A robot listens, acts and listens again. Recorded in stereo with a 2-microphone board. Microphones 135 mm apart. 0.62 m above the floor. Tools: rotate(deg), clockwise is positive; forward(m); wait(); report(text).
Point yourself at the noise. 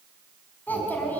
rotate(-30)
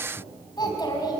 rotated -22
rotate(-150)
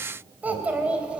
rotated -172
rotate(10)
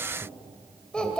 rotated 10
report("Facing the child speaking.")